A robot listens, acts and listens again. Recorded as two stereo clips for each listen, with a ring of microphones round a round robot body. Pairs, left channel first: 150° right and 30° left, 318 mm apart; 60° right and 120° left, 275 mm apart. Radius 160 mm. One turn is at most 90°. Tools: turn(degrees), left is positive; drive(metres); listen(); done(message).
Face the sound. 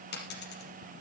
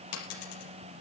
turn(degrees=-90)
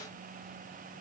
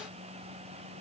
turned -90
done("Facing where the dropped coin came from. I can't hear it now.")